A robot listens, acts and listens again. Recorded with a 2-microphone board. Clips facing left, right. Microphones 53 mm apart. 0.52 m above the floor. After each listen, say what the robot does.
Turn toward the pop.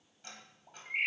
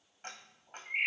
Turn 35° left.
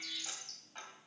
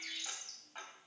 Keep listening.
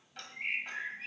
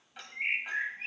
I heard a pop, but can't make it out now. It was about straight ahead or 110° left.